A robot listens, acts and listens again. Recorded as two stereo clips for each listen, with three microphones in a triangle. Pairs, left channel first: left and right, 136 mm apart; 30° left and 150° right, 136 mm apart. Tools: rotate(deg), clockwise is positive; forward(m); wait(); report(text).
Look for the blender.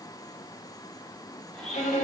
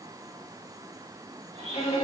rotate(-175)
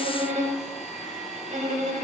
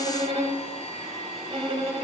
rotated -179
report("Found it: a blender, straight ahead.")